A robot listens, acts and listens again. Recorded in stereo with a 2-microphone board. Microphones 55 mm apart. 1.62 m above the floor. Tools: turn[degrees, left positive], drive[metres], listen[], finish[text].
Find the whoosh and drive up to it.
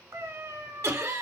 Action: listen[]
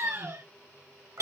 Action: listen[]
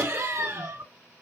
Action: finish[I can't make out a whoosh, only a cat meowing and laughter.]